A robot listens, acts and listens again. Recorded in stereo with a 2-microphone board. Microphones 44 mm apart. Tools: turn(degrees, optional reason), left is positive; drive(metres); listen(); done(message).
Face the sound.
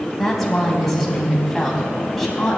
turn(degrees=30)
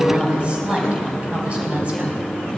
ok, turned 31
turn(degrees=-30, reason="So it is at 30° right.")
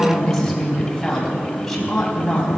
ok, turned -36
done("Facing the woman speaking.")